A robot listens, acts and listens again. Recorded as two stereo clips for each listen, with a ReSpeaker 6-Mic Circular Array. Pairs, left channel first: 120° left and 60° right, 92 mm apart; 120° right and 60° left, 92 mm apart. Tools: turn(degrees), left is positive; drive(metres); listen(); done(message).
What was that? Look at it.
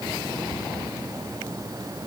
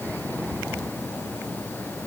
listen()
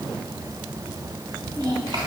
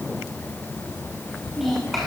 turn(degrees=-30)
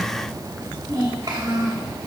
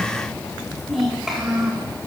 turn(degrees=-25)
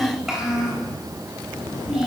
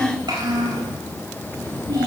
turn(degrees=20)
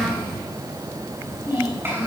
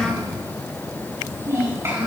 done("Facing the child speaking, over 4 m away.")